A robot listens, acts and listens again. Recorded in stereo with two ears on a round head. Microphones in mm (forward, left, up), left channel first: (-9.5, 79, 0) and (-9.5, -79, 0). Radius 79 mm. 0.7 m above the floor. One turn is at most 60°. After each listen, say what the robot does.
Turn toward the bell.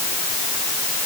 Keep listening.
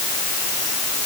Keep listening.
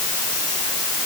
I can't make out a bell.